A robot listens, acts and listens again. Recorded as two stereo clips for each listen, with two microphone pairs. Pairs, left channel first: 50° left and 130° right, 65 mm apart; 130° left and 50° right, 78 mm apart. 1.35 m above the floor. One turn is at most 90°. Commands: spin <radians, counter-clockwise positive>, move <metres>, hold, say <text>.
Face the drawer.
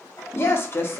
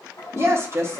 hold
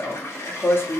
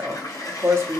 hold
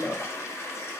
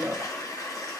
say I can't make out a drawer, only a toilet flushing and a woman speaking.